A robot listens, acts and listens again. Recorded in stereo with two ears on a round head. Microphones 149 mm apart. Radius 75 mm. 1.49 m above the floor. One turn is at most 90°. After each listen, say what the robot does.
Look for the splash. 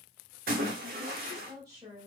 Turn 65° right.
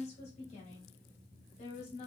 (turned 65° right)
Keep listening.
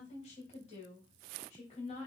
I heard a splash, but can't make it out now. It was about straight ahead or 50° right.